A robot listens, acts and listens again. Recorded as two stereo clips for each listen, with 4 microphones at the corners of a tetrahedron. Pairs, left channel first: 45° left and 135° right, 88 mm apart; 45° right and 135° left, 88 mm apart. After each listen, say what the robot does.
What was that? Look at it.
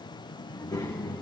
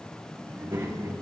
Turn 75° left.
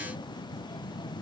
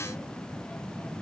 Turn 15° left.
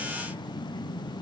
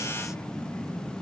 Facing the child speaking.